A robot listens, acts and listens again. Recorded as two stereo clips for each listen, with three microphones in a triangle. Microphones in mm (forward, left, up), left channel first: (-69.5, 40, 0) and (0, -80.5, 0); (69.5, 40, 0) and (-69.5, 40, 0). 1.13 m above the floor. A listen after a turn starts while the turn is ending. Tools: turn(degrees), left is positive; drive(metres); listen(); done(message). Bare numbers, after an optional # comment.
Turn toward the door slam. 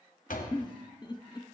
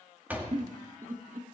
# The door slam: 100° left.
turn(100)
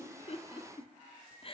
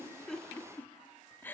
done("I heard a door slam from this way, but can't make it out now.")